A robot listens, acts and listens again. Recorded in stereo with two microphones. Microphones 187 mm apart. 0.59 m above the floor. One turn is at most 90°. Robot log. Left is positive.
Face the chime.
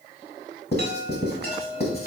note: The chime: about 50° right or 130° right.
cmd yaw -50
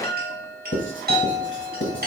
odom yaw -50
note: So it is at 65° right.
cmd yaw -65
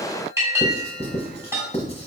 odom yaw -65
note: The chime is now 15° right.
cmd yaw -15
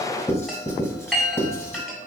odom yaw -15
end: Found it: a chime, straight ahead.